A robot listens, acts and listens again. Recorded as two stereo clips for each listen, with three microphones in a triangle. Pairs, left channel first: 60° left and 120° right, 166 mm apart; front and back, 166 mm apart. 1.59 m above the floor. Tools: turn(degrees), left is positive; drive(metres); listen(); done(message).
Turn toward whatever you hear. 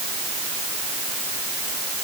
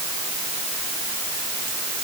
listen()
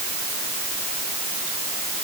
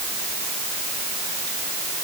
listen()
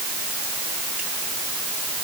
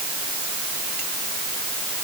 done("I can't make out anything to turn to.")